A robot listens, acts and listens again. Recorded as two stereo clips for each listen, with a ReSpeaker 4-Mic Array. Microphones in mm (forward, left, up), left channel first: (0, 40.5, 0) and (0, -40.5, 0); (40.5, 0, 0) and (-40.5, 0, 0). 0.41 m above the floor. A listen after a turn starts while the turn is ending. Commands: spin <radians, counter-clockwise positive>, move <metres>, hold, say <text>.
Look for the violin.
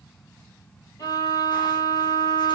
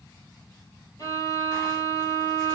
spin 0.79
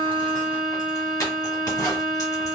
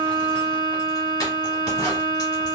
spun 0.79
say Facing the violin.